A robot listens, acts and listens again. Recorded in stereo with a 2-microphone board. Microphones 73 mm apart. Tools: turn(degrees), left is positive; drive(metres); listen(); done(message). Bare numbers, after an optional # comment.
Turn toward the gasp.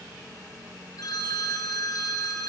listen()
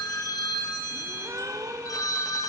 # The gasp: about 45° right or 135° right.
turn(-45)
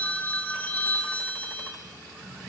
listen()
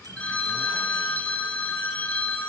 done("I heard a gasp, but can't make it out now. It was about straight ahead or 90° right.")